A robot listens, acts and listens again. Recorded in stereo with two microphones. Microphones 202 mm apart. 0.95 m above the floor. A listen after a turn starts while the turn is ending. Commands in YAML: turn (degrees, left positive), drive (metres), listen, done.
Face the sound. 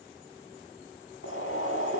turn: 90
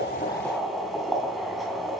done: "Found it: boiling, straight ahead."